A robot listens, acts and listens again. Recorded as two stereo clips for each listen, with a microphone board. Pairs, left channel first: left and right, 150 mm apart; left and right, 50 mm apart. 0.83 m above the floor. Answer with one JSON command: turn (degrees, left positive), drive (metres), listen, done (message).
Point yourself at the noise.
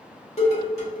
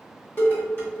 {"turn": 45}
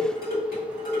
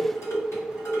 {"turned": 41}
{"turn": 95}
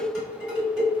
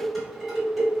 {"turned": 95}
{"done": "Found it: dishes clattering, straight ahead."}